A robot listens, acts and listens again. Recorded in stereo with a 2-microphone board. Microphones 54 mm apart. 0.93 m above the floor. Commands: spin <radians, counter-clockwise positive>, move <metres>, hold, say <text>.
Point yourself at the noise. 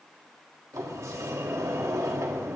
spin -1.31
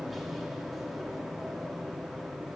say Found it: a sliding door, straight ahead.